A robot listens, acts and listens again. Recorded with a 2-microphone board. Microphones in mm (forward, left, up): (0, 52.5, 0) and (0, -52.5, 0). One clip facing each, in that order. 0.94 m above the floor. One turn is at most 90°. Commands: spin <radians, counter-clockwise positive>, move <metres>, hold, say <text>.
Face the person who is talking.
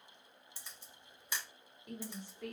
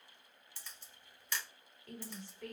spin 0.26
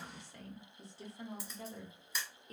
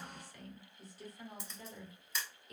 spin 1.57
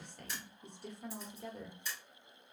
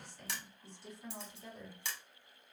spin 1.05
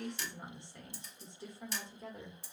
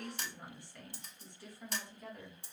spin 0.35
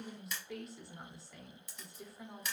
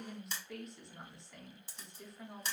say Facing the woman speaking, under 1 m away.